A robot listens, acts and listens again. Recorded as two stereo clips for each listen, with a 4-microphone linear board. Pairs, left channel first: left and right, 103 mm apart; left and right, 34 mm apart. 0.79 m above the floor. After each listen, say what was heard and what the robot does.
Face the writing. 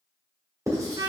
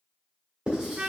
The writing: about 30° right or 150° right. Turn 30° right.
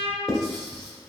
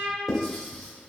Found it: writing, straight ahead.